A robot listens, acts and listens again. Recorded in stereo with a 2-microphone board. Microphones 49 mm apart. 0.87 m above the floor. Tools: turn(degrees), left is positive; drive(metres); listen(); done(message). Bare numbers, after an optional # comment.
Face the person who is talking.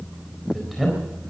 turn(30)
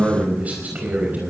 # So it is at 35° right.
turn(-35)
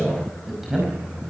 done("Found it: a man speaking, straight ahead, over 4 m away.")